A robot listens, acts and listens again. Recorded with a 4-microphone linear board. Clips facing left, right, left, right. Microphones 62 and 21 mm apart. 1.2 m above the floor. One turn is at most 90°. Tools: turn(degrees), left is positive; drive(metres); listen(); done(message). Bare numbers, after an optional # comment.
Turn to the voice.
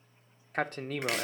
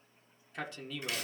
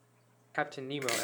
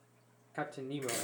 # The man speaking: about 45° left or 135° left.
turn(45)
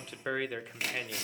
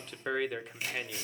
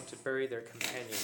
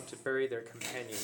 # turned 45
done("Facing the man speaking.")